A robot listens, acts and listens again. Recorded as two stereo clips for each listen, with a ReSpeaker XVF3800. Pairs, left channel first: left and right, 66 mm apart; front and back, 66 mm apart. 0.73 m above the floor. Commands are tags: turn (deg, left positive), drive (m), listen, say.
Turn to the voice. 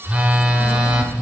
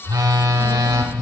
<turn deg="150"/>
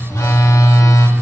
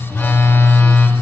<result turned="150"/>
<listen/>
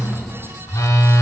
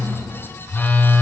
<say>Found it: a child speaking, straight ahead.</say>